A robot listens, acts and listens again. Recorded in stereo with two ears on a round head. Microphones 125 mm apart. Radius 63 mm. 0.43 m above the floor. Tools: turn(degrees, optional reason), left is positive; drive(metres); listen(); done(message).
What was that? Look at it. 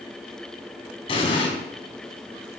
turn(degrees=40, reason="The explosion: about 40° left or 140° left.")
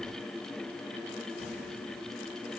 listen()
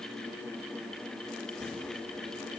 done("I heard an explosion, but can't make it out now. It was about straight ahead or 100° left.")